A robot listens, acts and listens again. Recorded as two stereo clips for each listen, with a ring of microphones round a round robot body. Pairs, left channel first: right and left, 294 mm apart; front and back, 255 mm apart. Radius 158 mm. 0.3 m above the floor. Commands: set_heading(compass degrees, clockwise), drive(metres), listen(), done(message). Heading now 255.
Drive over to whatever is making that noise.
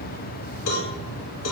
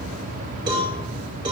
set_heading(0)
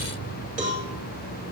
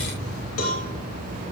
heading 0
set_heading(335)
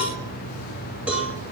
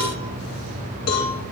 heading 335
drive(1.0)
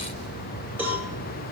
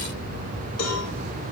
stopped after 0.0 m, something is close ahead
done("Something is in my way. I am facing the cowbell but have not reached it.")